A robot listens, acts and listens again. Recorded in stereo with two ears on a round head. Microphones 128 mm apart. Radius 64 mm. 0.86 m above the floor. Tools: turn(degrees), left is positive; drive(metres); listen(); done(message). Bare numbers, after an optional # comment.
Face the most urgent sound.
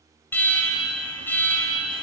turn(30)
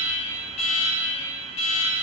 # So it is at 135° left.
turn(135)
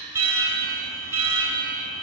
# The alarm is now 20° right.
turn(-20)
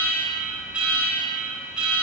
# The alarm is now 10° right.
turn(-10)
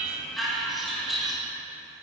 done("Facing the alarm, 1 to 2 m away.")